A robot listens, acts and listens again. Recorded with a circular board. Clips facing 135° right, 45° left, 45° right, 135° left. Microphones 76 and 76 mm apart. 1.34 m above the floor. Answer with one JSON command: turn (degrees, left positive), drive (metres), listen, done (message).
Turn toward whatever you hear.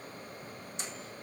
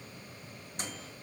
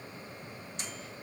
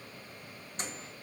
{"turn": 85}
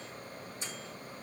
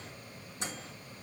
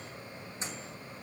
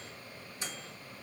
{"turn": 20}
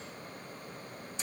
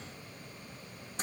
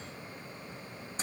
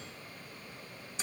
{"done": "Facing the microwave, 2 to 4 m away."}